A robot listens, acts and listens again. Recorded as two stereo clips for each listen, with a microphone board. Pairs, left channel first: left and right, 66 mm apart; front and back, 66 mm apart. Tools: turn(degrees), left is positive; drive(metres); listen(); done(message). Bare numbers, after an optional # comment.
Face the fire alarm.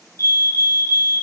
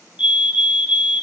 # The fire alarm: 115° right.
turn(-115)
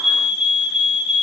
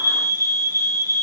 # The fire alarm is now 10° right.
turn(-10)
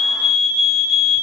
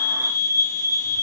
done("Found it: a fire alarm, straight ahead, over 4 m away.")